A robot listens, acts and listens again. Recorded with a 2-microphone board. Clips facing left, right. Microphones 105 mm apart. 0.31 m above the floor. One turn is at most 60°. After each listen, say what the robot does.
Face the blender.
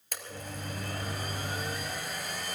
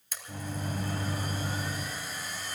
Turn 60° left.
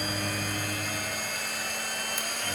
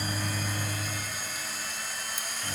Turn 60° left.
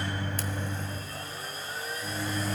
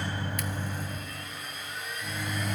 Turn 35° left.
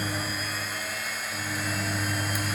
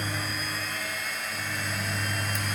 Found it: a blender, straight ahead.